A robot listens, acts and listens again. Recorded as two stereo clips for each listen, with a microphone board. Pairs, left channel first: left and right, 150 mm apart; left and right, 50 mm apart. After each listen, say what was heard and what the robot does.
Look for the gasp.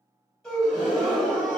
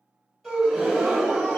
Turn 30° left.
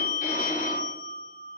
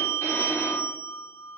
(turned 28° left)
Keep listening.
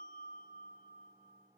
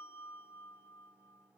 I heard a gasp, but can't make it out now. It was about 25° right or 150° left.